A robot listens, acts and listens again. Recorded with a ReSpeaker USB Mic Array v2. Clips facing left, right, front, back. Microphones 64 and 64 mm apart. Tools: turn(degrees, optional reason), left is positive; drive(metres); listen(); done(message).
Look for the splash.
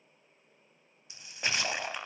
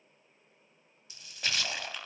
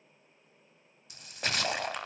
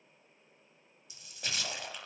turn(degrees=25, reason="The splash: 25° left.")
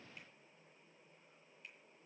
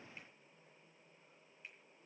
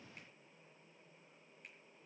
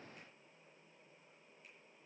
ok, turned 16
turn(degrees=10, reason="Nothing new. It was at 10° left.")
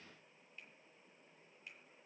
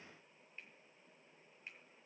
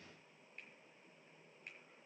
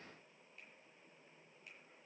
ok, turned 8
done("I heard a splash from this way, but can't make it out now.")